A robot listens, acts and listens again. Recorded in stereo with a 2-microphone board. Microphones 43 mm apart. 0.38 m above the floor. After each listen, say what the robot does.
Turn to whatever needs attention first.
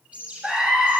Turn 25° right.
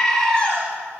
Found it: a scream, straight ahead.